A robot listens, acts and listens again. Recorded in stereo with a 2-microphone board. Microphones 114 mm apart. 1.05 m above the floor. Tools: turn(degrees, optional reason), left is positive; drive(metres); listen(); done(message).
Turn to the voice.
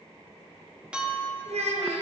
turn(degrees=-70, reason="The child speaking: about 70° right or 110° right.")
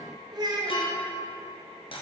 turn(degrees=-40, reason="So it is at 40° right.")
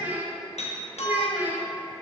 turn(degrees=-15, reason="The child speaking is now 15° right.")
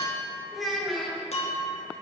done("Facing the child speaking.")